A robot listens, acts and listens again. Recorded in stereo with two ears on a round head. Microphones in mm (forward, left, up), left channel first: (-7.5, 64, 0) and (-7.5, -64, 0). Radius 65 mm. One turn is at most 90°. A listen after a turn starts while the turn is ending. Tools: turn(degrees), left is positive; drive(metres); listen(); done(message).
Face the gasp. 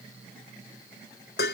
listen()
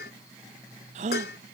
turn(degrees=-50)
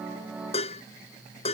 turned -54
listen()
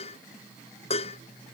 done("I heard a gasp, but can't make it out now. It was about 5° left or 75° right.")